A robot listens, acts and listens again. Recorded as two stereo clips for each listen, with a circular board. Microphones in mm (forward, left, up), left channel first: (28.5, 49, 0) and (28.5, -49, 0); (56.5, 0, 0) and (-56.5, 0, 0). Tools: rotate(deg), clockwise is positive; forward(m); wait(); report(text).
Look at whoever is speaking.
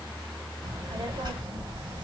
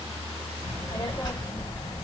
rotate(55)
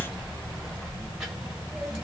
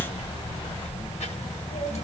rotate(10)
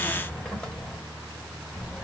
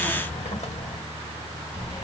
report("Facing the child speaking, 1 to 2 m away.")